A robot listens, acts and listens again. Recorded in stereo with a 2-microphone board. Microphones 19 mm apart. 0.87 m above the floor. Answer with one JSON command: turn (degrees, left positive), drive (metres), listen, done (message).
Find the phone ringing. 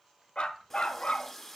{"listen": true}
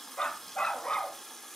{"listen": true}
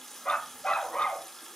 {"done": "I can't make out a phone ringing, only a running tap and a dog barking."}